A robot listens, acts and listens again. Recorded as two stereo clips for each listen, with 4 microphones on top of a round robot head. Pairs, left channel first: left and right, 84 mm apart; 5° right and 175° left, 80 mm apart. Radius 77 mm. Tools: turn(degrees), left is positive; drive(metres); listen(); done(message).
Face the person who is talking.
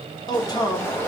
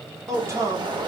turn(degrees=125)
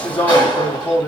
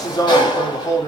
turn(degrees=30)
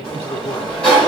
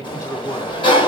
turn(degrees=35)
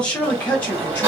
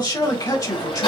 turn(degrees=20)
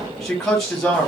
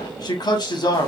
done("Found it: a man speaking, straight ahead, 1 to 2 m away.")